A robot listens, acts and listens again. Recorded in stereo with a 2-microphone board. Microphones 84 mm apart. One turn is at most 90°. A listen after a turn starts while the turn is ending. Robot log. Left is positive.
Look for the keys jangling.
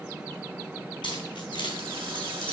note: The keys jangling: about 70° left or 110° left.
cmd yaw +70
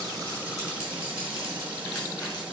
cmd idle
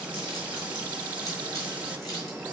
cmd idle
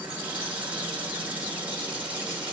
end: I heard keys jangling, but can't make it out now. It was about straight ahead or 40° left.